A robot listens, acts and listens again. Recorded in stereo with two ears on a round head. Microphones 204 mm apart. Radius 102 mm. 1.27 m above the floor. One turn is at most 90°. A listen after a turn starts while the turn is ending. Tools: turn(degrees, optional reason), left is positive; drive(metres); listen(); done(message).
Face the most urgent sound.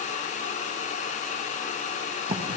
listen()
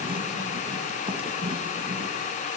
listen()
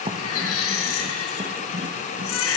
turn(degrees=70, reason="The baby crying: about 70° left or 110° left.")
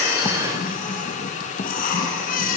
turn(degrees=40, reason="So it is at 40° left.")
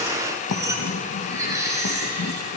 turn(degrees=-15, reason="The baby crying is now 15° right.")
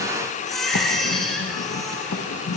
done("Facing the baby crying, over 4 m away.")